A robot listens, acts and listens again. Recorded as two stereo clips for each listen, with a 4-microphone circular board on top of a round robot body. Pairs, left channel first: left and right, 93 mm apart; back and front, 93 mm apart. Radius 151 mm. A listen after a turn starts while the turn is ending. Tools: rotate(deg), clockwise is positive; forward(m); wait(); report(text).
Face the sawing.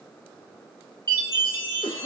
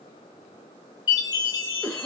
wait()
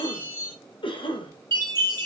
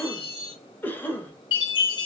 wait()
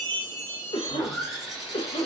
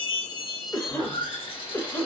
rotate(175)
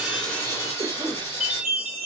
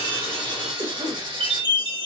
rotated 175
rotate(-25)
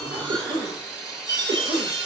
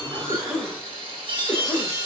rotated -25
report("Facing the sawing.")